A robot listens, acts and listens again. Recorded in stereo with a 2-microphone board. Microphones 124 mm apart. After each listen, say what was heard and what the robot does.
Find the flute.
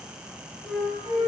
Turn 30° left.
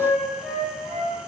So it is at 150° left. Turn 150° left.
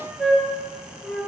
Found it: a flute, straight ahead.